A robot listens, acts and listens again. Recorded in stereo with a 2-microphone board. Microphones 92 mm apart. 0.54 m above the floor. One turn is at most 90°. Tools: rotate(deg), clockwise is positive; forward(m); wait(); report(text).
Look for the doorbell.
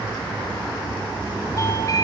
rotate(-40)
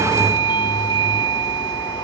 rotate(-90)
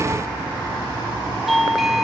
report("Facing the doorbell, 1 to 2 m away.")